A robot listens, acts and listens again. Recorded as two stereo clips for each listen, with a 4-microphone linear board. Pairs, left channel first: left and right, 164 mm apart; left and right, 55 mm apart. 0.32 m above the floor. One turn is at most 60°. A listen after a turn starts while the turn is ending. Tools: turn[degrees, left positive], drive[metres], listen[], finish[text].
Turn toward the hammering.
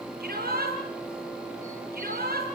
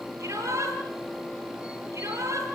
Action: listen[]
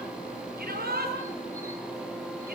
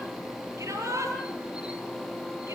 Action: listen[]
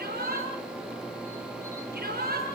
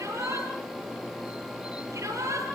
Action: finish[I can't make out hammering, only a shout.]